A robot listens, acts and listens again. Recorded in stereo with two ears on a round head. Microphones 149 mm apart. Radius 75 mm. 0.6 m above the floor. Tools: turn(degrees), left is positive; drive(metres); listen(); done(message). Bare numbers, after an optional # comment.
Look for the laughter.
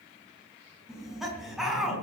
turn(30)
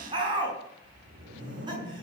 # So it is at 25° right.
turn(-25)
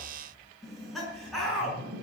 done("Found it: laughter, straight ahead, over 4 m away.")